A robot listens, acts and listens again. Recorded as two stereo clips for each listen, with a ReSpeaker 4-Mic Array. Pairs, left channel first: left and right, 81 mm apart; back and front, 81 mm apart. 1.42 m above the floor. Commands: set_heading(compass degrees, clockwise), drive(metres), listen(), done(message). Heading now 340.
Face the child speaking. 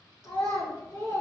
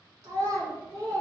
set_heading(290)
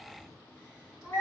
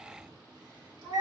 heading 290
done("Facing the child speaking.")